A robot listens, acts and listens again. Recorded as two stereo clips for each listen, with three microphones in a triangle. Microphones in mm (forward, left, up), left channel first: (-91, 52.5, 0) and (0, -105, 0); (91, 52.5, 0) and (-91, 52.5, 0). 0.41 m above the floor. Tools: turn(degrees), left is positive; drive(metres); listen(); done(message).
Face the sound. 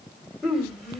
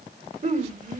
turn(degrees=-150)
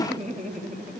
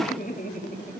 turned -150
turn(degrees=-30)
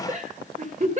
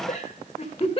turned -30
turn(degrees=-45)
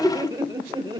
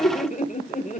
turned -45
done("Found it: laughter, straight ahead.")